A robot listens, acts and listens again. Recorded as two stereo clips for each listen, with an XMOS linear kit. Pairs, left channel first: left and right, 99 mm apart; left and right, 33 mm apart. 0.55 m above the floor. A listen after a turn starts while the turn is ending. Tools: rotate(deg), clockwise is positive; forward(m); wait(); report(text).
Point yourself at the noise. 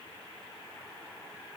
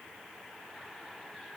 wait()
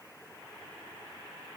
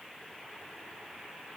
wait()
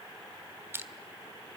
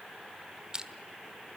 rotate(25)
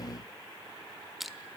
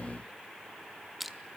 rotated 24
report("Facing the crushing.")